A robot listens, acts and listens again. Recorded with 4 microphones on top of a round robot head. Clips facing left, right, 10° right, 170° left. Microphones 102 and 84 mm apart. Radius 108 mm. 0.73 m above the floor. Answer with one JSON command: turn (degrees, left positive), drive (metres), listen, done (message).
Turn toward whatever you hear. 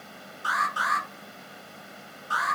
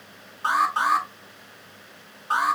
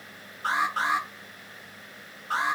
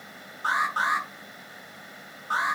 {"turn": -125}
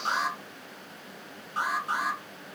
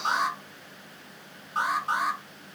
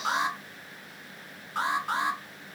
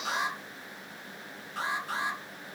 {"turn": -45}
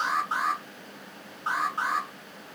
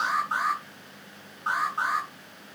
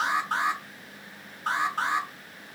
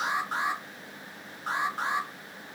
{"done": "Found it: an alarm, straight ahead, over 4 m away."}